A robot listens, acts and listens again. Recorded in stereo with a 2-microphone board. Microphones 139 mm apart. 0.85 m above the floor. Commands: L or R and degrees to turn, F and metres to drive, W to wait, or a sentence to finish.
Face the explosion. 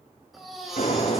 L90
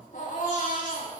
I heard an explosion from this way, but can't make it out now.